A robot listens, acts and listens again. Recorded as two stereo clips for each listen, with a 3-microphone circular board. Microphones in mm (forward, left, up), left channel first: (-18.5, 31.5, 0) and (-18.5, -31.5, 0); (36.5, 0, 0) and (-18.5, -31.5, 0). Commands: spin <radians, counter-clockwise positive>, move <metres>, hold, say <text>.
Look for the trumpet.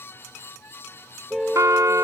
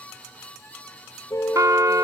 spin -2.09
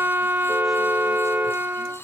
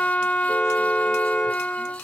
spin -0.61
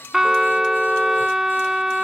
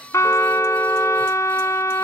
say Facing the trumpet.